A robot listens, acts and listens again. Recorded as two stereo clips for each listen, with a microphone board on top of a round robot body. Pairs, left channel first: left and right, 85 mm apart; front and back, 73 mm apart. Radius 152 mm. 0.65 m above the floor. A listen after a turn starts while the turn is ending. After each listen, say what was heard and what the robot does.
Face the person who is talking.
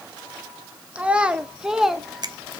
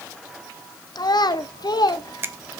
Facing the child speaking.